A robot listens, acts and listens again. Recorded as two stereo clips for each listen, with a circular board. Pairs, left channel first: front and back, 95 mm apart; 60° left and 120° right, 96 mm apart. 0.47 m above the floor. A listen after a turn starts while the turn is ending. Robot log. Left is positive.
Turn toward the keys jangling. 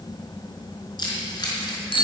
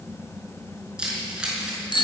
note: The keys jangling: 40° right.
cmd yaw -40
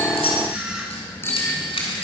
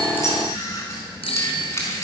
end: Found it: keys jangling, straight ahead.